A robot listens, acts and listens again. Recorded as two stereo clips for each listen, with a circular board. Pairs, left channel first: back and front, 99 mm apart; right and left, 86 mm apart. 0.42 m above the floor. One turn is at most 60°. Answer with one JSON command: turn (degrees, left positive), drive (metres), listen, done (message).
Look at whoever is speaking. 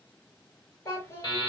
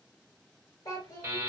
{"turn": -60}
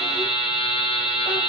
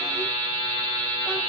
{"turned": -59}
{"turn": -60}
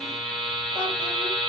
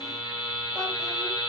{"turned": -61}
{"turn": -10}
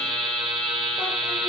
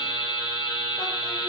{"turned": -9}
{"done": "I heard a child speaking from this way, but can't make it out now."}